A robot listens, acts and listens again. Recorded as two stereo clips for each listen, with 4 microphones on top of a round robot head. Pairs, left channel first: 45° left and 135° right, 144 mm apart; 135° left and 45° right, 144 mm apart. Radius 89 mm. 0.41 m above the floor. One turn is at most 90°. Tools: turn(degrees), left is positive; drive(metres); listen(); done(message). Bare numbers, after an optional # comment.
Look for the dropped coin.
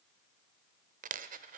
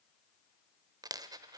# The dropped coin: 110° right.
turn(-90)
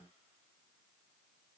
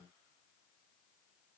# Nothing new. It was at 20° right.
turn(-20)
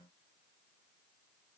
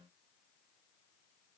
done("I heard a dropped coin from this way, but can't make it out now.")